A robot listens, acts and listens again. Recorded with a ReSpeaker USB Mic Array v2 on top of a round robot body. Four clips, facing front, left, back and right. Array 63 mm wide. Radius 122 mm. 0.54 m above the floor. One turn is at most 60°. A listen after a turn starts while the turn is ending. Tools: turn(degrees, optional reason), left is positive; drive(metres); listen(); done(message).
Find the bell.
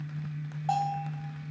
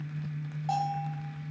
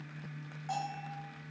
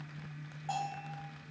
turn(degrees=10, reason="The bell: 10° left.")
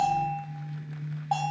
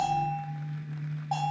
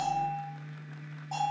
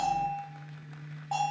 done("Facing the bell.")